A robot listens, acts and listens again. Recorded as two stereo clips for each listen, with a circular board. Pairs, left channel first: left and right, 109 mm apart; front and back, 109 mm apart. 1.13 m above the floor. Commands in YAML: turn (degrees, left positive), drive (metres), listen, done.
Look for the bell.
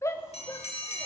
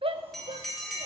turn: 90
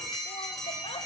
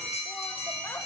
done: "Found it: a bell, straight ahead, 1 to 2 m away."